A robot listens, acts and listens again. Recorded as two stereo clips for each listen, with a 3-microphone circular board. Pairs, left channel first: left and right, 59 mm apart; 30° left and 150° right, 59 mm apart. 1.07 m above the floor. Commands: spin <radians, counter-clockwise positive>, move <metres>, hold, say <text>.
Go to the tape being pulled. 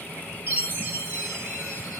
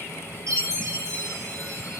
hold
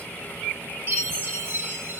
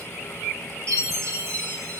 hold
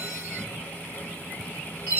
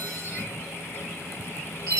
say I can't make out tape being pulled, only a chime.